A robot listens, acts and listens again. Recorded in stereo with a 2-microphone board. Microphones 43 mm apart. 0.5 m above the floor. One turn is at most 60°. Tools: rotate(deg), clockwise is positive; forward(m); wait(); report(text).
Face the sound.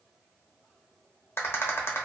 rotate(-60)
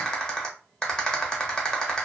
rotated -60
rotate(-20)
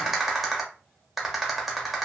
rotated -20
report("Found it: a rattle, straight ahead.")